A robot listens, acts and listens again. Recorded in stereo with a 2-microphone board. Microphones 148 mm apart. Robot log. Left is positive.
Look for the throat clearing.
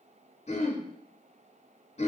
note: The throat clearing: about 50° left or 130° left.
cmd yaw +50
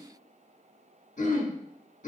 note: So it is at 75° left.
cmd yaw +75
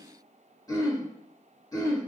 note: The throat clearing is now 25° left.
cmd yaw +25
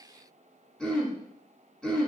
end: Found it: throat clearing, straight ahead.